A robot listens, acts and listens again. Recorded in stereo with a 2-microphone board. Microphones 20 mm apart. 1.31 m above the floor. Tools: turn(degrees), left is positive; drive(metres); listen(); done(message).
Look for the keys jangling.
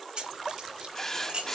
turn(degrees=-55)
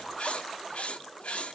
listen()
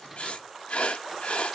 turn(degrees=-20)
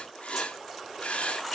listen()
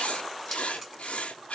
done("Facing the keys jangling, over 4 m away.")